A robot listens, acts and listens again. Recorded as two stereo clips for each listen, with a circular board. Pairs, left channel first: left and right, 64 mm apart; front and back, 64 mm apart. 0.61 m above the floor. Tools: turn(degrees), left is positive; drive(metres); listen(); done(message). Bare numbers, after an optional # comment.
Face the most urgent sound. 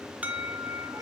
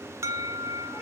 # The alarm: 155° right.
turn(-155)
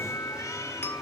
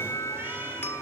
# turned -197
# The alarm is now 45° left.
turn(45)
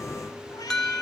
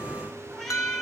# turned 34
# The alarm is now 10° left.
turn(10)
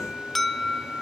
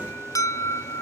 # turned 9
done("Facing the alarm, 1 to 2 m away.")